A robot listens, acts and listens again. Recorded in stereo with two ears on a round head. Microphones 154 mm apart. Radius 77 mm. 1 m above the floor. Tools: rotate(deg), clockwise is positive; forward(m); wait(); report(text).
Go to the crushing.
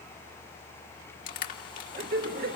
rotate(-50)
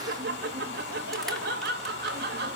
wait()
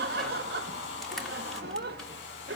wait()
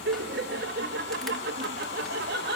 report("I heard crushing, but can't make it out now. It was about straight ahead or 80° left. I did not reach it.")